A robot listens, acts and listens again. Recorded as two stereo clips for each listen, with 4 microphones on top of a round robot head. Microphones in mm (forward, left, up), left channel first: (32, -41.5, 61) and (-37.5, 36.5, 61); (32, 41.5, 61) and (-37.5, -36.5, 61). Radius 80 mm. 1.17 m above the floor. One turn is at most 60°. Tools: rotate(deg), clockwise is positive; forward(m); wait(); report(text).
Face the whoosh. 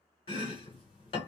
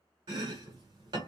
wait()
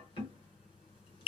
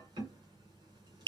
wait()
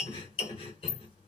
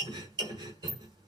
report("I can't make out a whoosh to turn to.")